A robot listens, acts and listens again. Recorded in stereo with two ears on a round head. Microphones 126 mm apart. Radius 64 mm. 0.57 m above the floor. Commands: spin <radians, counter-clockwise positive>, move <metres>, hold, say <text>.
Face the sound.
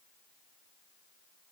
hold
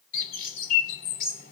spin 1.22
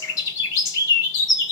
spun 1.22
spin 0.52
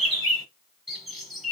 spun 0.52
say Found it: a bird, straight ahead, under 1 m away.